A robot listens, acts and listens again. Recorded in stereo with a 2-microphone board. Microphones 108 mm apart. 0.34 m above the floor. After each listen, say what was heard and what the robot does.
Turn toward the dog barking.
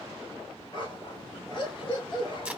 The dog barking: about 45° left or 135° left. Turn 45° left.
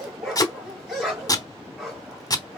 Found it: a dog barking, straight ahead.